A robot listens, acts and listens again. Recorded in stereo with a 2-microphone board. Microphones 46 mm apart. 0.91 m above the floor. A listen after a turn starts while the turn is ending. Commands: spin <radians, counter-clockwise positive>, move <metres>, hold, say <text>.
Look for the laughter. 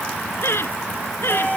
spin 1.05
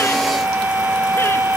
hold
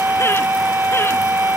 hold
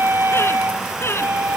spin 1.22
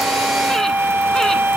hold
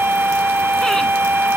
hold
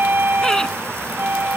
say I heard laughter from this way, but can't make it out now.